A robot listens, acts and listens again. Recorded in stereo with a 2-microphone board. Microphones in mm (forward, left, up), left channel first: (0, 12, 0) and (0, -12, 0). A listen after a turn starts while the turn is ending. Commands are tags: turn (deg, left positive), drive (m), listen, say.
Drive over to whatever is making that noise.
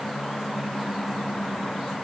<listen/>
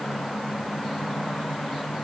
<listen/>
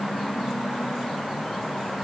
<say>I can't make out anything to turn to.</say>